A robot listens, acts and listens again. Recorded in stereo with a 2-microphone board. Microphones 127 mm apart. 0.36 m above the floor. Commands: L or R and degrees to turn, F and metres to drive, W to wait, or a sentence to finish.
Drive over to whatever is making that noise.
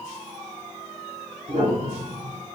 R70
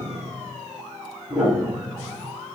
R10
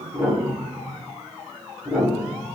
F1.0
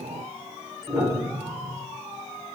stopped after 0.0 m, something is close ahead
Blocked. The piano is further on, straight ahead.